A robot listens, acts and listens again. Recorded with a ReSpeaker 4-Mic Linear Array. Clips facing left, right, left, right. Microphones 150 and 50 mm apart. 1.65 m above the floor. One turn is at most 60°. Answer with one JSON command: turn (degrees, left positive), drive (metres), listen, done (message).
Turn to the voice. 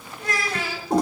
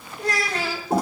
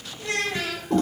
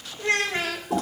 {"turn": -35}
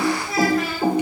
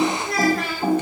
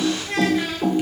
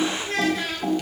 {"done": "Facing the child speaking, 2 to 4 m away."}